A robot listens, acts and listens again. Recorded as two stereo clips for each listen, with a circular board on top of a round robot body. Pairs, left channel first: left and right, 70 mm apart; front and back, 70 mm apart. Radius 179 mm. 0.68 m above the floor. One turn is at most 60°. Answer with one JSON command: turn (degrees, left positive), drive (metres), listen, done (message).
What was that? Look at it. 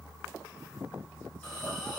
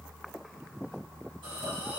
{"turn": 60}
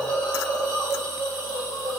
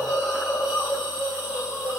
{"turn": 60}
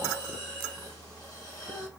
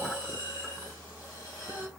{"turn": 50}
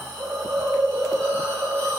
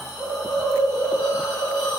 {"turn": 15}
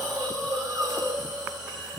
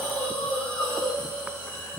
{"done": "Found it: a hiss, straight ahead, 1 to 2 m away."}